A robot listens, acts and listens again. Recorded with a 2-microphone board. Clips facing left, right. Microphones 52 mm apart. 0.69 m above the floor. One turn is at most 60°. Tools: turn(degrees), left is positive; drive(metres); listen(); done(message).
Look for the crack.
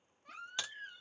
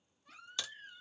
turn(degrees=20)
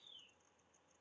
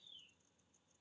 listen()
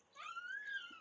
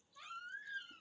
done("I heard a crack, but can't make it out now. It was about straight ahead or 140° left.")